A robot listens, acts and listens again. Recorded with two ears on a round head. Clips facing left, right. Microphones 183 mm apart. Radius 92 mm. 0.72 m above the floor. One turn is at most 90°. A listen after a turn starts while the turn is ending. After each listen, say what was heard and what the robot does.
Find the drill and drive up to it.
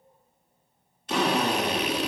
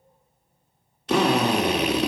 The drill: about 50° right or 130° right. Turn 50° right.
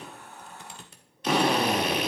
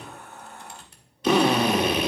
So it is at 75° right. Turn 75° right.
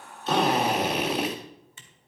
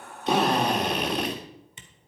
Drive 1.0 m forward.
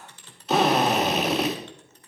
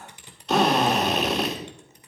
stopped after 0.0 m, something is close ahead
Something is in my way. I am facing the drill but have not reached it.